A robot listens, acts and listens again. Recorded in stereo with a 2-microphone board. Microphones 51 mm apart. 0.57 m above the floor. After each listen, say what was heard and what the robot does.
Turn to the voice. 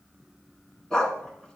Keep listening.
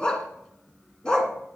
Keep listening.
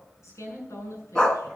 Turn 90° left.
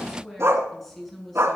Facing the woman speaking.